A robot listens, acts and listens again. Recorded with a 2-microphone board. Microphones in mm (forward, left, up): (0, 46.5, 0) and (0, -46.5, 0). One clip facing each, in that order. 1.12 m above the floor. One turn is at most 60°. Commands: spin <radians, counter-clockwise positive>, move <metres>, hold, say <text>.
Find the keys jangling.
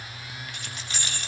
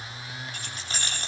spin -0.61
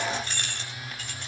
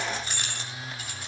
say Found it: keys jangling, straight ahead.